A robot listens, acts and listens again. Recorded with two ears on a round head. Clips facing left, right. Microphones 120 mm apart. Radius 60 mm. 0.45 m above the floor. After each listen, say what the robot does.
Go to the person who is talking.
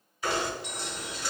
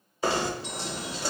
Keep listening.
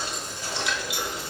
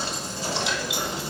Keep listening.
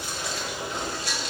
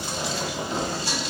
I can't make out anyone speaking, only knocking.